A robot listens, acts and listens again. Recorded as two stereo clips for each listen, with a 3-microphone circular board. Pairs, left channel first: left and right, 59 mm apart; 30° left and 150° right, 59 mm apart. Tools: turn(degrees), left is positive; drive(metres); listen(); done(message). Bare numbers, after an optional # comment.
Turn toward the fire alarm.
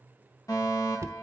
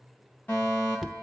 # The fire alarm: 90° left.
turn(90)
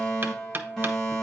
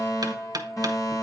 done("Found it: a fire alarm, straight ahead.")